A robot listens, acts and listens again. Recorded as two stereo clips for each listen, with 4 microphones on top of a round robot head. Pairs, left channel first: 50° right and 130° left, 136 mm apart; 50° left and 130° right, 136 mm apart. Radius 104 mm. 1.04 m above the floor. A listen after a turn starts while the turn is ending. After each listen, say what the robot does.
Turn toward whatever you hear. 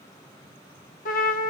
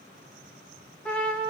Turn 35° right.
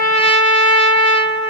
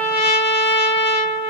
Found it: a trumpet, straight ahead, under 1 m away.